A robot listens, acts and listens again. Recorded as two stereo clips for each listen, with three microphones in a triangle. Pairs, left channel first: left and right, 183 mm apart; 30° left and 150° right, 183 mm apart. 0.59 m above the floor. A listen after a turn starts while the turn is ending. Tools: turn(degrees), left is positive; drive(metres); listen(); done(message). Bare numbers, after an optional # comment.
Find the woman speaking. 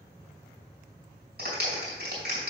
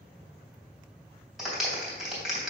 listen()
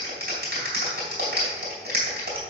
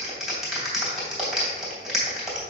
listen()
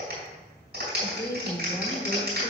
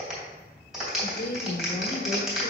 # The woman speaking: 15° left.
turn(15)
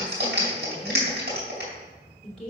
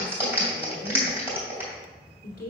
done("Found it: a woman speaking, straight ahead.")